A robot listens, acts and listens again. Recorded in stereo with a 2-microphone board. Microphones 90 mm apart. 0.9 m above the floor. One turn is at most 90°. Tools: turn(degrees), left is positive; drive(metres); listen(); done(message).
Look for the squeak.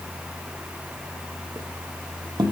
turn(degrees=-55)
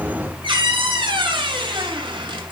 turn(degrees=-70)
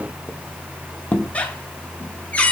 turn(degrees=15)
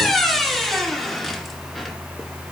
done("Facing the squeak, 1 to 2 m away.")